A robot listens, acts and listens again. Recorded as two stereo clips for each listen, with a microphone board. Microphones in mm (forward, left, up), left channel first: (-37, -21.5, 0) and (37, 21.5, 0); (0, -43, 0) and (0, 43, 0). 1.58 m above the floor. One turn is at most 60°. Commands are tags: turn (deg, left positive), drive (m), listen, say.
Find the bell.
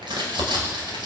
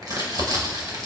<listen/>
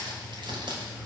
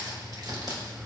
<listen/>
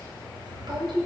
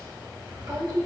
<say>I can't make out a bell to turn to.</say>